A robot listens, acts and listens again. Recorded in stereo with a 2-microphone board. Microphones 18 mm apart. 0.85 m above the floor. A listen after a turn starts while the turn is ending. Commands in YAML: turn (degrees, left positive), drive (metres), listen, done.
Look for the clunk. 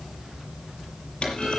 turn: 90
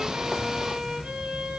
done: "Facing where the clunk came from. I can't hear it now."